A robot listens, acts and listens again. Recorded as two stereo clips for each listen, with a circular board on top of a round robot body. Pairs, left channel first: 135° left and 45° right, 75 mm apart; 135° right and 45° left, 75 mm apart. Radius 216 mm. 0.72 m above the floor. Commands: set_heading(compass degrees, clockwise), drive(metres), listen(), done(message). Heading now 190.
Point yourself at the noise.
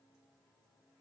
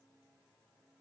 listen()
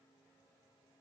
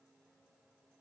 listen()
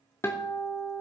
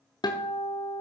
set_heading(355)
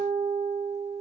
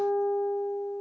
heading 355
set_heading(45)
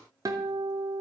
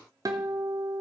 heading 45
done("Found it: a guitar, straight ahead, under 1 m away.")